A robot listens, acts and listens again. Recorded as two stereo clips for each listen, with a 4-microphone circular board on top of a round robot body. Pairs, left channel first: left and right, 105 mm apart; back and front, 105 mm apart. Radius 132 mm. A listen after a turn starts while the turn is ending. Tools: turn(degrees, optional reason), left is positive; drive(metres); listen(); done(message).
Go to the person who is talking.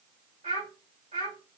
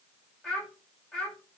turn(degrees=-95, reason="The child speaking: 95° right.")
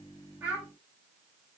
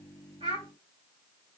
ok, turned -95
drive(metres=1.0)
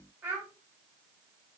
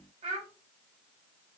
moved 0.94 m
turn(degrees=-20, reason="The child speaking is now 20° right.")
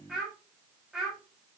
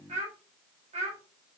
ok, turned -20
drive(metres=1.0)
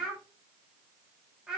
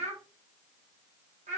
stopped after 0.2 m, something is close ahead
done("Arrived at the child speaking, straight ahead.")